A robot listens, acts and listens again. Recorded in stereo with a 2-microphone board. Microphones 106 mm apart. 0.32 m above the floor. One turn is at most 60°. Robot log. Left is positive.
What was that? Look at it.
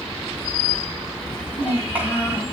cmd yaw -30
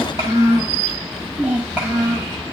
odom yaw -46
cmd yaw -30
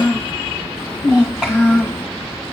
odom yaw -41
cmd yaw -30
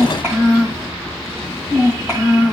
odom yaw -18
note: The child speaking: about 25° right or 155° right.
cmd yaw -25
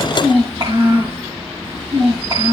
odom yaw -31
note: So it is at 130° right.
cmd yaw -60
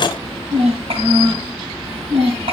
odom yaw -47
note: The child speaking is now 60° right.
cmd yaw -60
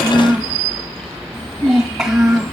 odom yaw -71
end: Found it: a child speaking, straight ahead.